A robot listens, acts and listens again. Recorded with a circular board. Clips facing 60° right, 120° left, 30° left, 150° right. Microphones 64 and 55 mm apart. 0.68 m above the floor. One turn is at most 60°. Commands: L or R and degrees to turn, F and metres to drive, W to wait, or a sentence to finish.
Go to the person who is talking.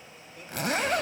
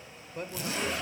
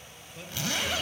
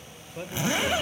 L60
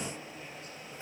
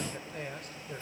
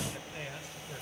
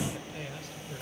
L60
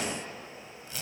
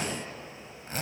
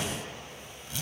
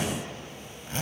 L45
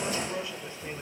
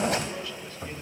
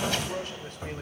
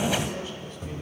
L10
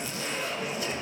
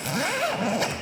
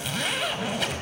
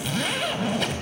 W
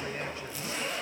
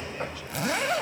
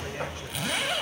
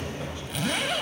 W
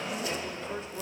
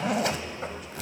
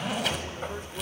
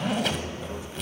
Facing where the man speaking came from. I can't hear it now. I did not reach it.